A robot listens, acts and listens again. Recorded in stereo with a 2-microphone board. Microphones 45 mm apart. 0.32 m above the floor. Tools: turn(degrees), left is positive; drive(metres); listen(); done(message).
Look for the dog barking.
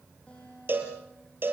listen()
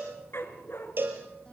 turn(degrees=65)
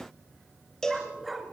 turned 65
done("Facing the dog barking.")